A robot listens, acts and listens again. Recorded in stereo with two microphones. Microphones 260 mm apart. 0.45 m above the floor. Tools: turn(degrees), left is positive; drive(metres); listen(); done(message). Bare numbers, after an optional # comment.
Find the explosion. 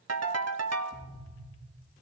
# The explosion: about 30° left or 150° left.
turn(30)
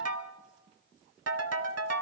listen()
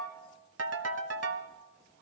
done("I heard an explosion, but can't make it out now. It was about straight ahead or 120° left.")